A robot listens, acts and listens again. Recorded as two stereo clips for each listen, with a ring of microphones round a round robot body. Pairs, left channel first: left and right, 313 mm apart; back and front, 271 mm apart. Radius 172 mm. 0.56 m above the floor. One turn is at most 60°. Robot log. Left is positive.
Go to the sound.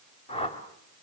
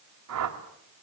note: The whoosh: 15° left.
cmd yaw +15
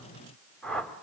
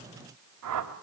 cmd fwd 1.0
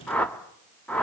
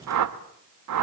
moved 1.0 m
cmd fwd 1.0
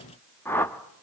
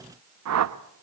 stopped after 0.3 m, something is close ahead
end: Arrived at the whoosh, straight ahead.